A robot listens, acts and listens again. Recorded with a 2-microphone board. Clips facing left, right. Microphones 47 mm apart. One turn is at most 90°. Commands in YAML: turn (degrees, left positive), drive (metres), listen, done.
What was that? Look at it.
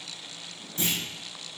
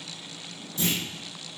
turn: 40
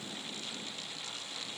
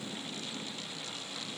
listen: true
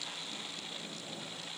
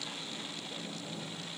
done: "I heard a clunk, but can't make it out now. It was about straight ahead or 100° left."